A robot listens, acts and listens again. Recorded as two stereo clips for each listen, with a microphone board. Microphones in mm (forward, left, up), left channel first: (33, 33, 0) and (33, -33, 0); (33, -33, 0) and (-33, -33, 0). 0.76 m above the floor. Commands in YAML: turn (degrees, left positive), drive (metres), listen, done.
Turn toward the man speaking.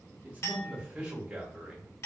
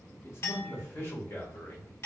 turn: -15
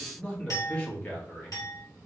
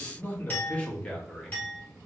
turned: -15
turn: 75
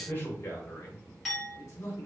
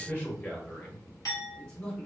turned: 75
turn: 65
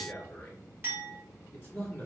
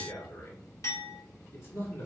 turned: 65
turn: 35
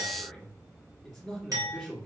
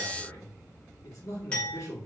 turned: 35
done: "Found it: a man speaking, straight ahead, 1 to 2 m away."